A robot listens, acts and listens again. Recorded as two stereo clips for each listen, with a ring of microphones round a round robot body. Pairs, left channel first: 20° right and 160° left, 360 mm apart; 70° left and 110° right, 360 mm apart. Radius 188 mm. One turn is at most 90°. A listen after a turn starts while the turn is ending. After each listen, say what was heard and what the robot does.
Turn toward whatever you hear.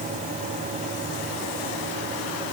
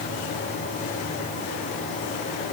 Keep listening.
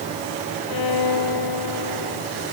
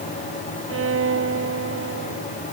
The violin: 55° right. Turn 55° right.
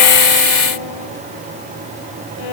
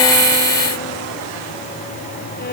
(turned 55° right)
Keep listening.
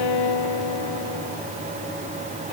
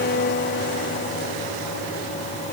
Found it: a violin, straight ahead.